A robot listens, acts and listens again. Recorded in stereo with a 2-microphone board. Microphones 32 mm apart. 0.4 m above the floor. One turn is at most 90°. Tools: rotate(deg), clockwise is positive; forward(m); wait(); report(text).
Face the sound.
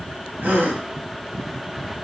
rotate(60)
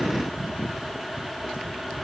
wait()
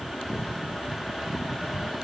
report("I heard a gasp, but can't make it out now. It was about straight ahead or 60° right.")